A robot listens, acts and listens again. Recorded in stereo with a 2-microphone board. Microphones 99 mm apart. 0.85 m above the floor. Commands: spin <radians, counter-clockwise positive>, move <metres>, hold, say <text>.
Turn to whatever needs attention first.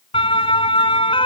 spin 1.05
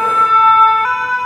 say Found it: a siren, straight ahead.